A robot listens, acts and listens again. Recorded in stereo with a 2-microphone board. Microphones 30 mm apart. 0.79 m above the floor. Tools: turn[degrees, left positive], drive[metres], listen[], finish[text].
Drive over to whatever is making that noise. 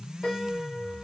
Action: turn[30]
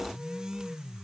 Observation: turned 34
Action: listen[]
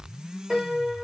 Thought: So it is at 20° right.
Action: turn[-20]
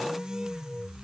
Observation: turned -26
Action: listen[]
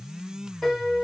Action: drive[1.0]
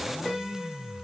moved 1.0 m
Thought: The piano is now 10° left.
Action: turn[10]
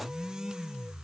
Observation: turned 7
Action: listen[]
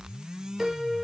Action: drive[1.0]
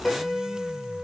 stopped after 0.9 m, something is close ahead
Action: finish[I am next to the piano.]